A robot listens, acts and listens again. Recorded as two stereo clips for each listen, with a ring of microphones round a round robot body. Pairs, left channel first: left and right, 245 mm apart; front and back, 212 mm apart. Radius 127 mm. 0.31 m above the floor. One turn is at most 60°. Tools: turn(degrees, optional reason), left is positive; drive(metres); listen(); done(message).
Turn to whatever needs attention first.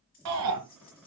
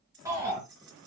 turn(degrees=-60, reason="The shout: 100° right.")
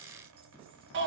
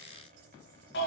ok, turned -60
turn(degrees=-45, reason="The shout is now 45° right.")
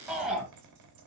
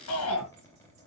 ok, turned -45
done("Facing the shout, 2 to 4 m away.")